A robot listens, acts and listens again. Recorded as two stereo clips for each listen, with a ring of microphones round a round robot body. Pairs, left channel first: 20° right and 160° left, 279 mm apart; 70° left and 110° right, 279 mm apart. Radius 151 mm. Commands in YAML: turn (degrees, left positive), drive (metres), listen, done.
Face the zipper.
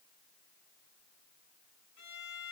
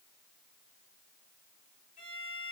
listen: true
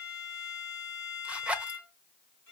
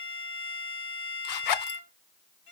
turn: 70
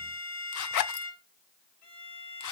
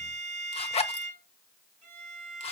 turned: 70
done: "Found it: a zipper, straight ahead, under 1 m away."